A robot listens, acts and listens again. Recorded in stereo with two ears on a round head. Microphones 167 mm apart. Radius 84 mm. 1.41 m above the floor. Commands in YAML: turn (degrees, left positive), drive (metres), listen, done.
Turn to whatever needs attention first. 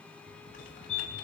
turn: 90
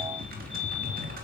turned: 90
listen: true
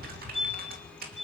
done: "Facing the fire alarm, over 4 m away."